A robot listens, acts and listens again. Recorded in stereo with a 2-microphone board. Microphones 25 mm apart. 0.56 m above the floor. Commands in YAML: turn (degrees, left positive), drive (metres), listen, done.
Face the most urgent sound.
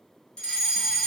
turn: 35
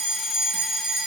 done: "Facing the fire alarm."